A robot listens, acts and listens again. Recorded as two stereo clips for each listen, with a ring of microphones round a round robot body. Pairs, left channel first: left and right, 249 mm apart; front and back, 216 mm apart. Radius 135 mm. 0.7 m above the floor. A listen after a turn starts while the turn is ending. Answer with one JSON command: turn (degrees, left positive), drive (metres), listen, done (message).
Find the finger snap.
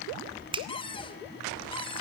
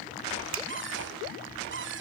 {"turn": -160}
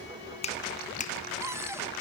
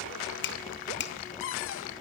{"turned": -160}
{"turn": 30}
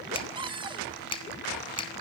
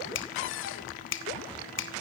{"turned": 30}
{"turn": 20}
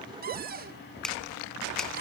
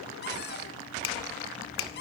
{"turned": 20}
{"done": "Found it: a finger snap, straight ahead."}